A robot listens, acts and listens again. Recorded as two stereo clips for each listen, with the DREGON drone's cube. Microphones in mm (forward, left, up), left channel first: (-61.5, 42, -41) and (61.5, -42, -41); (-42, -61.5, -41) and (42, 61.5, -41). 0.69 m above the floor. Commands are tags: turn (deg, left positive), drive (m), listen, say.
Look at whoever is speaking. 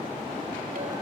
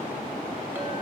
<listen/>
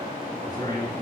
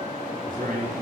<turn deg="85"/>
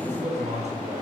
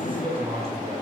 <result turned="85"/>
<say>Facing the man speaking, over 4 m away.</say>